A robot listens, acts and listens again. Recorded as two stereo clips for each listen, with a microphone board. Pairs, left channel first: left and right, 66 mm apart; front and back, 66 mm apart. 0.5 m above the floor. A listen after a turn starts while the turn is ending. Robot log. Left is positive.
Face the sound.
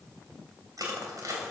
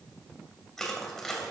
note: The crushing: 80° right.
cmd yaw -80
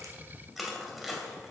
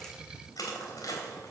end: Facing the crushing, 2 to 4 m away.